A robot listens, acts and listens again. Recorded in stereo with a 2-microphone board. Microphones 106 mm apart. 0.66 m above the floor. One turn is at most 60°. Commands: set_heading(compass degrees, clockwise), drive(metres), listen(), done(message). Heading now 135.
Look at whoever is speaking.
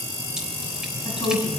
set_heading(85)
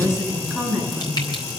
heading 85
done("Found it: a woman speaking, straight ahead.")